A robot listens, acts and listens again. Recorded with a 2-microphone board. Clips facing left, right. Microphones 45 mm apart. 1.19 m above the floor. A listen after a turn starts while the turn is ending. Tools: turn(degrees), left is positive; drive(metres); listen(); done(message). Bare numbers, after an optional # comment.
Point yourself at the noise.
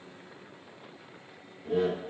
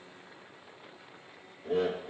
# The laughter: about 50° right or 130° right.
turn(-50)
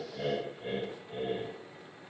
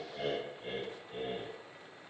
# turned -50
# So it is at 20° left.
turn(20)
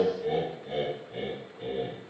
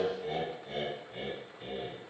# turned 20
# The laughter is now 30° left.
turn(30)
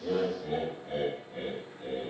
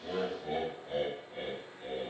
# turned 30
done("Found it: laughter, straight ahead.")